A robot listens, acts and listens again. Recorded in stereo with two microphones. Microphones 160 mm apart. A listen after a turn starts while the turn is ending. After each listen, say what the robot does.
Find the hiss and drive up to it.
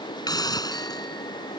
Turn 25° left.
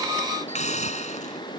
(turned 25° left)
Turn 125° left.
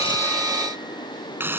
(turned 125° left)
Turn 15° right.
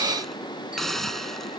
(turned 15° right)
Drive 1.0 m forward.
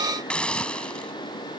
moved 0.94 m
Drive 1.0 m forward.
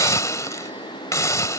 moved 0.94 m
Turn 25° left.
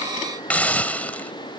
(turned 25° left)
Turn 10° left.
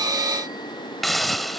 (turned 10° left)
Drive 1.0 m forward.
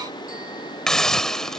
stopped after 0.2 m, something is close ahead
Arrived at the hiss, straight ahead.